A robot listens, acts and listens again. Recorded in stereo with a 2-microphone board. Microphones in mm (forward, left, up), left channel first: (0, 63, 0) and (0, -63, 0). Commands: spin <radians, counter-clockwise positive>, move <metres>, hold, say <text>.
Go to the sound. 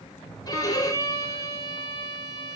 spin 0.52
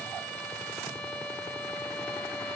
move 1.0
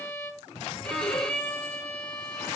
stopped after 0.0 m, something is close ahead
say Blocked. The violin is further on, straight ahead.